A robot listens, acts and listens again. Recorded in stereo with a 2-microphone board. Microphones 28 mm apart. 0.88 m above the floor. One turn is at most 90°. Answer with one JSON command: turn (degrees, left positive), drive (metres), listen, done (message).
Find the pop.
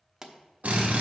{"turn": -20}
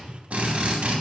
{"listen": true}
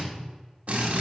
{"done": "I heard a pop, but can't make it out now. It was about straight ahead or 140° right."}